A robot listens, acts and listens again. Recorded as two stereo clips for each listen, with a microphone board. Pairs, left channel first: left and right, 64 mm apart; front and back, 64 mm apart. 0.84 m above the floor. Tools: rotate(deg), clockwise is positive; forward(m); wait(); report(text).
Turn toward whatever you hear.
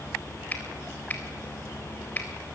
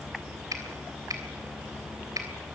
rotate(-155)
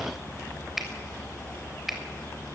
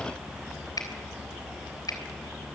report("Found it: a finger snap, straight ahead.")